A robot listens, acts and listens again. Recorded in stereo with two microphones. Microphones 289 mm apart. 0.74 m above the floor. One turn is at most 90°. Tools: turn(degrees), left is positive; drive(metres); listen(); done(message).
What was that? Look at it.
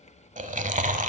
turn(degrees=-25)
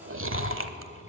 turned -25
turn(degrees=-90)
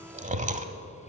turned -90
turn(degrees=-30)
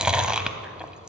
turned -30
done("Facing the chewing, under 1 m away.")